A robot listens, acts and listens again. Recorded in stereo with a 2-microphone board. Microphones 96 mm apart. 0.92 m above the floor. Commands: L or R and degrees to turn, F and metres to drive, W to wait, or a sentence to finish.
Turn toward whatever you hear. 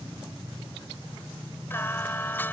L20
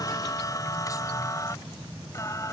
L30
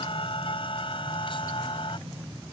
L120
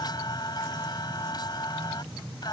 L45
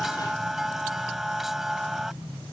Found it: singing, straight ahead.